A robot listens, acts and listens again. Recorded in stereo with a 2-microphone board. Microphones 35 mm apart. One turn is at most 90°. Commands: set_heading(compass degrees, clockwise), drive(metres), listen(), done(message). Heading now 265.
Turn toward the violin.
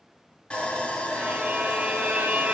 set_heading(325)
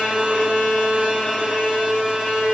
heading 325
done("Found it: a violin, straight ahead, 1 to 2 m away.")